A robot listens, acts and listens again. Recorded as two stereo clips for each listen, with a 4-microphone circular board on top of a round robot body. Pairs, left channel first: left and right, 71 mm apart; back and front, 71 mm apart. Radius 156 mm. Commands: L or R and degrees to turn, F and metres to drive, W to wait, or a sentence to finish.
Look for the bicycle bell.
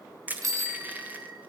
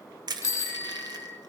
R125
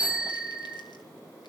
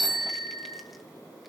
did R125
R15
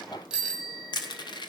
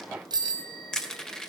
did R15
Facing the bicycle bell, 2 to 4 m away.